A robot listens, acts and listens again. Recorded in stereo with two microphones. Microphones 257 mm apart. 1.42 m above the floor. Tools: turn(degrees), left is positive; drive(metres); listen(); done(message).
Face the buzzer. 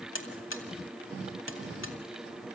turn(degrees=50)
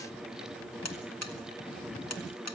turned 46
turn(degrees=85)
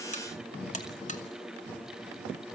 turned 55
turn(degrees=30)
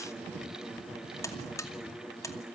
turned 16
turn(degrees=10)
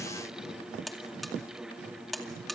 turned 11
done("Facing the buzzer, 2 to 4 m away.")